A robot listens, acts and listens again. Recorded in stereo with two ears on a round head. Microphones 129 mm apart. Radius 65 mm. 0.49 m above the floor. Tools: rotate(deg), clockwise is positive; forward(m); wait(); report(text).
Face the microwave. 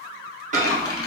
rotate(55)
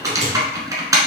rotate(60)
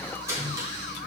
rotate(25)
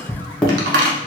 rotate(-10)
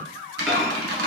wait()
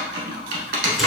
wait()
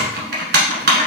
report("Facing where the microwave came from. I can't hear it now.")